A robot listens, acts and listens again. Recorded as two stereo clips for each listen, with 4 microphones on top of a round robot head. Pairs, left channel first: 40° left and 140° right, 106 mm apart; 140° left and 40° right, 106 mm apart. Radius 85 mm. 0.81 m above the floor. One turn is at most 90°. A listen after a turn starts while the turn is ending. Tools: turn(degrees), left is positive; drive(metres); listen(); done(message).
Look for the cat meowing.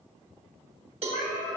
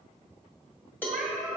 turn(degrees=40)
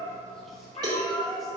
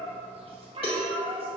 turn(degrees=-10)
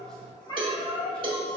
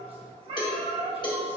turn(degrees=-10)
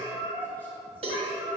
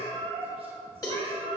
turn(degrees=-10)
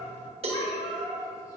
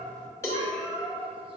done("Found it: a cat meowing, straight ahead.")